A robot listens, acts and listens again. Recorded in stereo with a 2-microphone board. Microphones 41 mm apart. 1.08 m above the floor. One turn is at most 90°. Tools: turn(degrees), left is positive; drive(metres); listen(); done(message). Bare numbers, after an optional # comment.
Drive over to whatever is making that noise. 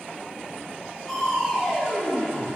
turn(30)
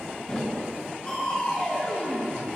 # So it is at 150° left.
turn(90)
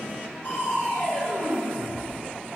# The crushing is now 85° left.
turn(85)
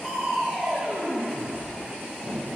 drive(1.0)
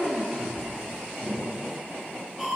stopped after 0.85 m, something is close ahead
done("I am next to the crushing.")